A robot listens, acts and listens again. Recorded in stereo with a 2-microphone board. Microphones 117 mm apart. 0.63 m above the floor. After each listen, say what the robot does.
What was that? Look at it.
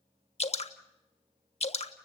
Turn 65° left.
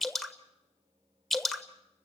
Facing the dripping, 1 to 2 m away.